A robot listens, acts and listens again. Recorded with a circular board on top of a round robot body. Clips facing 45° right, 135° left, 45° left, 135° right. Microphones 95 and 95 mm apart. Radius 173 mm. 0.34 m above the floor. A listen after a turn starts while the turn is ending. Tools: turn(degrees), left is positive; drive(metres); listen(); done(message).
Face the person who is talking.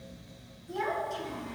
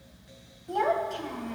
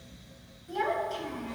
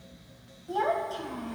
turn(degrees=165)
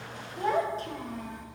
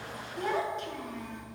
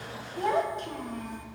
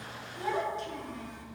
done("Found it: a child speaking, straight ahead, 1 to 2 m away.")